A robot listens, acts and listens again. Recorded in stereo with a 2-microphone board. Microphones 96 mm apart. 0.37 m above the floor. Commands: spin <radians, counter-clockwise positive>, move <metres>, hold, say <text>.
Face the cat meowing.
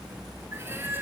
spin -0.35
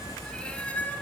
spin 0.35
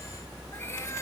hold
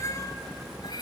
spin 0.87
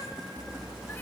hold
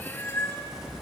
spin 0.44
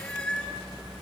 spin 0.17
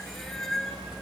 say Found it: a cat meowing, straight ahead, 1 to 2 m away.